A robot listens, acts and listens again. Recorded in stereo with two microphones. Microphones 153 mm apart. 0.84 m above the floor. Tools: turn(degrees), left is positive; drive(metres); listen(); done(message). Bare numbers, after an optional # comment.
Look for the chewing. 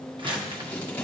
listen()
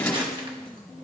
listen()
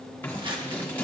done("I can't make out chewing, only scissors and crumpling.")